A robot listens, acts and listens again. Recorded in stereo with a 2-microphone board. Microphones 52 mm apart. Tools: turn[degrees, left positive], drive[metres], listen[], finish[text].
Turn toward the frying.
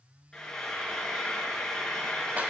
Action: turn[30]
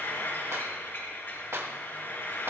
Thought: So it is at 135° left.
Action: turn[135]
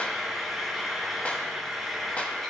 Action: finish[Facing the frying.]